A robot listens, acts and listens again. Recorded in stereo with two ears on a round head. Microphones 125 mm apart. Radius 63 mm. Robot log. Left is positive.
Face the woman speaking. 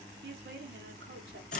cmd yaw -90
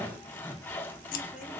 cmd idle
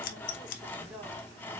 note: The woman speaking is now 10° right.
cmd yaw -10
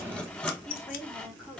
end: Found it: a woman speaking, straight ahead, 2 to 4 m away.